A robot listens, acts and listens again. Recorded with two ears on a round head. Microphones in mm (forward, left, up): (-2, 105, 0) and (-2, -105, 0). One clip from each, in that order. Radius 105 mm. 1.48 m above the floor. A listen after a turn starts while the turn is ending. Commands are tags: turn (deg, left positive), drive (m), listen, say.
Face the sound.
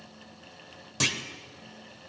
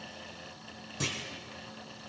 <turn deg="35"/>
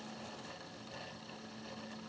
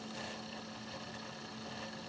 <listen/>
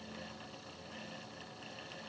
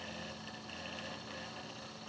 <say>I heard a clunk, but can't make it out now. It was about straight ahead or 110° left.</say>